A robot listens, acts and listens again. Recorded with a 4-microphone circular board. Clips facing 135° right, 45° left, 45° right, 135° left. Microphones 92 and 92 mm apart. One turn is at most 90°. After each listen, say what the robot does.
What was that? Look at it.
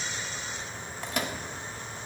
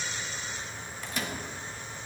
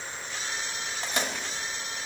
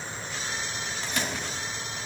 Turn 90° right.
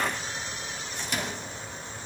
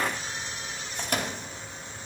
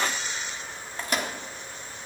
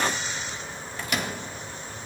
Turn 10° left.
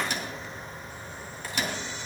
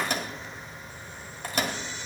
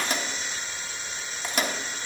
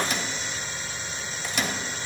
Found it: a microwave, straight ahead.